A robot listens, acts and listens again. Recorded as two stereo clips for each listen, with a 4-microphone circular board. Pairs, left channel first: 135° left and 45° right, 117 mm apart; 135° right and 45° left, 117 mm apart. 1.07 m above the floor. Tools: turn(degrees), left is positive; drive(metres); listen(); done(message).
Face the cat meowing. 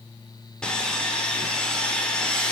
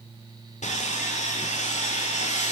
listen()
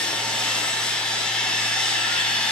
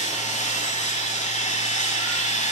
listen()
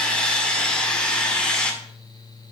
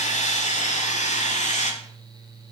done("I can't make out a cat meowing to turn to.")